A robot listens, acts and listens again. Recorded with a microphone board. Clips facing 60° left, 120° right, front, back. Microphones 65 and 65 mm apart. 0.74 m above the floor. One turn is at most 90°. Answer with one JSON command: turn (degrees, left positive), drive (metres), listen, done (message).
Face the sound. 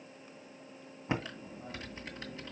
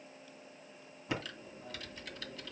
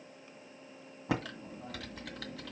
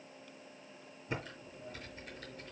{"done": "Found it: typing on a keyboard, straight ahead."}